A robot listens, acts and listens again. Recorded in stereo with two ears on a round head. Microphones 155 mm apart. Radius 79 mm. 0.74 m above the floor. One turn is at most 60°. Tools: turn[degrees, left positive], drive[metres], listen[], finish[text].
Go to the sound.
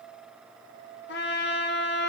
Thought: The trumpet: about 75° left or 105° left.
Action: turn[60]
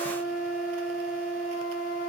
Thought: So it is at 50° left.
Action: turn[50]
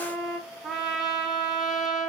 Action: drive[1.0]
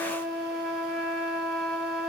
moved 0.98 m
Action: drive[1.0]
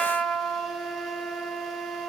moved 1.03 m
Action: drive[1.0]
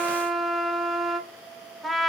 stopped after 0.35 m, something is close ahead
Action: finish[I am next to the trumpet.]